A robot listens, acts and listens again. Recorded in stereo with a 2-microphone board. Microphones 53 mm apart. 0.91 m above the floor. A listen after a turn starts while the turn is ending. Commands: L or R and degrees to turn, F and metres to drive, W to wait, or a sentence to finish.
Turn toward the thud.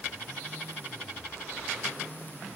W
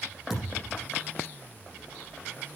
R30
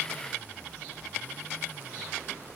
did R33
W
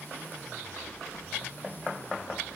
I heard a thud, but can't make it out now. It was about 25° left or 135° right.